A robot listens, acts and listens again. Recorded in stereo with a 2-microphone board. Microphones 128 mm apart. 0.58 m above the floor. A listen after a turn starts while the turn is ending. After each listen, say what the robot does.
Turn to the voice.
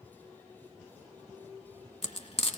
Keep listening.
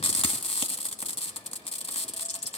Keep listening.
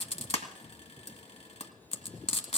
I can't make out anyone speaking, only frying.